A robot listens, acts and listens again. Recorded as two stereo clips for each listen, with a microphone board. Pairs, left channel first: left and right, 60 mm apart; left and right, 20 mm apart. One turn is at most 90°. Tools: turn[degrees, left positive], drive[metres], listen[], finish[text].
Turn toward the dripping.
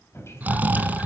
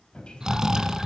Thought: The dripping: about 45° left or 135° left.
Action: turn[45]
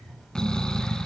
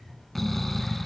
Action: listen[]
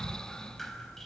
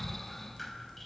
Action: finish[Found it: dripping, straight ahead.]